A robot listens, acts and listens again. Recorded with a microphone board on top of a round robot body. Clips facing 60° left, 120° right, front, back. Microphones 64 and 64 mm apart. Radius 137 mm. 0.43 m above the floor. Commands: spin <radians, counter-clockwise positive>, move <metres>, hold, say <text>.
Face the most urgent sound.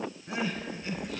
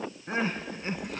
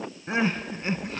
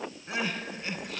spin -1.05
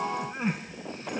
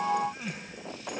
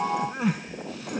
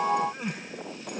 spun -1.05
say Facing the crying.